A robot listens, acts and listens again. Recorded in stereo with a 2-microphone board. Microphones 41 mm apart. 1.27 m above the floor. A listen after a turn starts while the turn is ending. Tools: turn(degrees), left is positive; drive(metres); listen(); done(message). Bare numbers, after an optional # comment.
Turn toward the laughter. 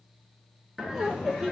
turn(-30)
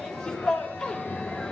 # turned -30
# So it is at 15° left.
turn(15)
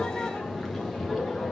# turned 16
done("Facing the laughter.")